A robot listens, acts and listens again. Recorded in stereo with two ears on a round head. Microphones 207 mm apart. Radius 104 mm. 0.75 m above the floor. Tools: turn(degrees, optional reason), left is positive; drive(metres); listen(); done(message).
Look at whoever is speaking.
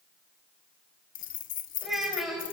turn(degrees=30)
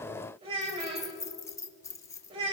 turn(degrees=-25, reason="So it is at 25° right.")
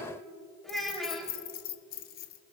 done("Facing the child speaking, 2 to 4 m away.")